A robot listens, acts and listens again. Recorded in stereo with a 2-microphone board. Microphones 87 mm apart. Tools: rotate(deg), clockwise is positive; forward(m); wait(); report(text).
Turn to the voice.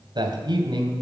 rotate(60)
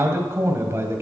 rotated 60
rotate(35)
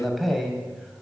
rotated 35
report("Found it: a man speaking, straight ahead, 2 to 4 m away.")